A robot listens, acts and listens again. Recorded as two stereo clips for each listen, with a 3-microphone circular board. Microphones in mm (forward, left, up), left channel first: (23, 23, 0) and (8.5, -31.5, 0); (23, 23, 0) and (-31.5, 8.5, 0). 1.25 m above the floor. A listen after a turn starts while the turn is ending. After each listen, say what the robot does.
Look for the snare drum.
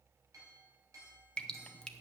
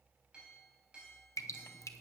Keep listening.
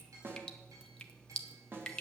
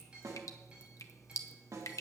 Turn 155° right.
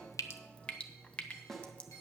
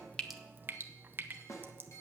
Turn 10° right.
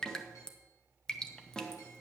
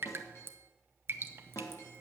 Found it: a snare drum, straight ahead.